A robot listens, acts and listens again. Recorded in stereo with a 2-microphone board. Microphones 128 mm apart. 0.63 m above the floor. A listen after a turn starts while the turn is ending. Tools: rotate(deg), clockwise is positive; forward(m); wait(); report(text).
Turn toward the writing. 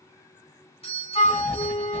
rotate(-20)
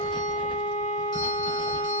wait()
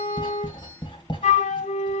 rotate(-145)
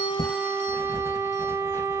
rotate(-20)
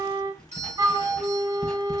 report("Facing the writing.")